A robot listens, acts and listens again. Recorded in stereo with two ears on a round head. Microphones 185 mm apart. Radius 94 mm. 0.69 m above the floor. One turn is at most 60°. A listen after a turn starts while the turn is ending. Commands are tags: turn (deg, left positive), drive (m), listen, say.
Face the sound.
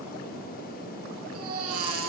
<turn deg="-60"/>
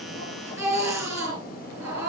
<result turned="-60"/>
<turn deg="-15"/>
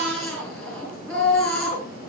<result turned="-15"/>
<say>Found it: a baby crying, straight ahead, over 4 m away.</say>